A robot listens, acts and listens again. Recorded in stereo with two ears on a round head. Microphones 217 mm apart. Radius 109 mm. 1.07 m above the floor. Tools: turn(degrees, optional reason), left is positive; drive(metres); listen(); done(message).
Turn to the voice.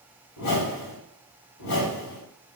listen()
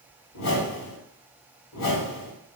listen()
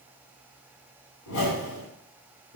done("I can't make out anyone speaking, only a whoosh.")